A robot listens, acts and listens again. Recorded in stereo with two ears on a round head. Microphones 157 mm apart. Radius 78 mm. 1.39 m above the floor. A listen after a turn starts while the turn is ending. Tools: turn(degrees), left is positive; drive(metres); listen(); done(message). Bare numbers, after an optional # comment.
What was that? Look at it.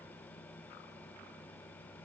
listen()
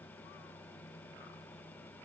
listen()
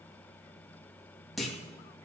turn(30)
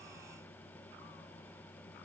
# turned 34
listen()
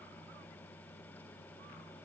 done("I heard a clunk, but can't make it out now. It was about 35° right or 145° left.")